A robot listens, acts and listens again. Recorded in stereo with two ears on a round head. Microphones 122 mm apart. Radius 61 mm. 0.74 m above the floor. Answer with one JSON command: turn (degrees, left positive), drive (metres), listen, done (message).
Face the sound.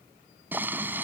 {"turn": -30}
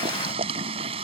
{"turn": -135}
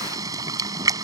{"turn": -25}
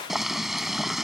{"done": "Found it: boiling, straight ahead."}